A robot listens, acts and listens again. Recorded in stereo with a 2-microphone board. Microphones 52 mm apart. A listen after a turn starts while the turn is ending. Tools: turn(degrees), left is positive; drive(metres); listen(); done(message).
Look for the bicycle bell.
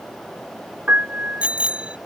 turn(degrees=-25)
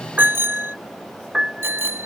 turn(degrees=-130)
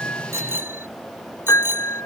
turn(degrees=-45)
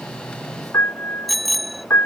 done("Facing the bicycle bell.")